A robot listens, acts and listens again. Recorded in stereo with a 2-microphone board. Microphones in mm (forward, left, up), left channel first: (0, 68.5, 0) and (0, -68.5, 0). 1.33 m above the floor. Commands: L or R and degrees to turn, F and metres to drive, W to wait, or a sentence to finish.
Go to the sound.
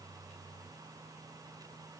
W
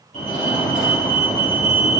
L70
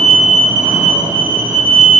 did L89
R10
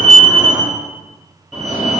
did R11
F1.0
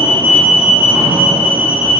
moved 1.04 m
R10
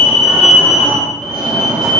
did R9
F1.0
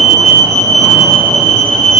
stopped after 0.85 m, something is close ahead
I am next to the fire alarm.